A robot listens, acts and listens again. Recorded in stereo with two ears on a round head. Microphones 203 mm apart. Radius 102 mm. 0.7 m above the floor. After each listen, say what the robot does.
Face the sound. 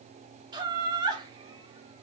Turn 20° right.
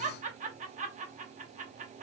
Turn 140° right.
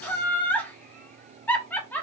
Turn 10° left.
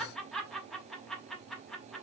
Found it: laughter, straight ahead.